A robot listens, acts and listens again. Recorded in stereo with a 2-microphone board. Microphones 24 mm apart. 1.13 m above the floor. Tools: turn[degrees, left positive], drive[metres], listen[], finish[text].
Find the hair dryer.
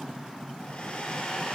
Thought: The hair dryer: about 45° left or 135° left.
Action: turn[45]
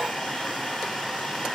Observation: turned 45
Action: finish[Facing the hair dryer.]